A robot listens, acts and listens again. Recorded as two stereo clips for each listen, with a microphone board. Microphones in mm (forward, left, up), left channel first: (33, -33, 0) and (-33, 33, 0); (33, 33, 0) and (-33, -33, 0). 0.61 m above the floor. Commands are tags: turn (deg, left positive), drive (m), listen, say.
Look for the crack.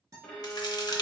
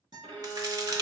<turn deg="-90"/>
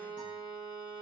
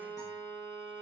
<say>I heard a crack from this way, but can't make it out now.</say>